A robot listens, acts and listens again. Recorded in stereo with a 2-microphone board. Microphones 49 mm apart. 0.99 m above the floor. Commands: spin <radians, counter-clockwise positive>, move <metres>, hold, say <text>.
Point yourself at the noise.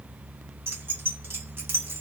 spin -0.87
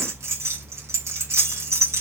spin -1.31
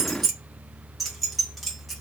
say Facing the keys jangling, under 1 m away.